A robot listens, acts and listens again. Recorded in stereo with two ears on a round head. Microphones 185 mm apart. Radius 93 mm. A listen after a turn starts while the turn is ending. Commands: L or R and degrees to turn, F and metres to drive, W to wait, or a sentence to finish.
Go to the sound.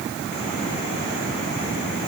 W
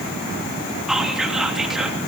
L30
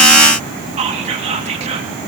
R30
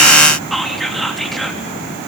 F1.0
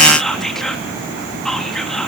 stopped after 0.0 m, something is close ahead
Blocked. The whispering is further on, straight ahead.